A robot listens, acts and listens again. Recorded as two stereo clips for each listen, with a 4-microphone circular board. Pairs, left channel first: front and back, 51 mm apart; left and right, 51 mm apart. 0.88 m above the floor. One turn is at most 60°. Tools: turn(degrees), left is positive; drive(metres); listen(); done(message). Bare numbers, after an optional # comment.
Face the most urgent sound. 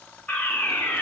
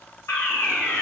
# The fire alarm: 65° left.
turn(60)
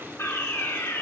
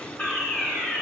# The fire alarm is now 20° left.
turn(20)
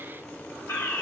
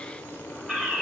done("Found it: a fire alarm, straight ahead, over 4 m away.")